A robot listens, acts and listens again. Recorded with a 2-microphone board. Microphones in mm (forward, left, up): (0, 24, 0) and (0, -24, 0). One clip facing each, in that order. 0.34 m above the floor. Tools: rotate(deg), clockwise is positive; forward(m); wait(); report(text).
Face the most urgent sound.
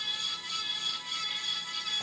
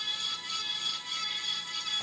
wait()
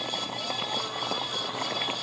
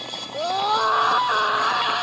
rotate(75)
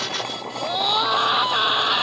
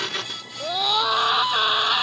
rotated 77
report("Found it: a scream, straight ahead.")